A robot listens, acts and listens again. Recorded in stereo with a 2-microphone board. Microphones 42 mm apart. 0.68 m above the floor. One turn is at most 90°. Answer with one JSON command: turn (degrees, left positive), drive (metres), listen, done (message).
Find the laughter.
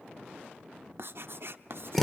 {"listen": true}
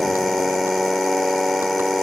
{"listen": true}
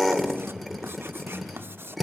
{"turn": 90}
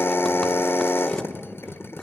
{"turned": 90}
{"listen": true}
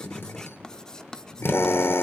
{"turn": 15}
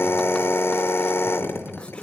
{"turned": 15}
{"done": "Found it: laughter, straight ahead, over 4 m away."}